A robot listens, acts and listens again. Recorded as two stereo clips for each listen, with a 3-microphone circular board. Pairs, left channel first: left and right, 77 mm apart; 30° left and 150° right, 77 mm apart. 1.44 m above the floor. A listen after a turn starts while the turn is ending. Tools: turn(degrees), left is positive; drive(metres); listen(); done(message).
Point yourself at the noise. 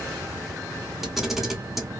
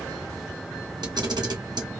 turn(degrees=180)
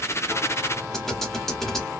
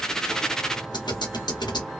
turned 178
done("Found it: a camera shutter, straight ahead.")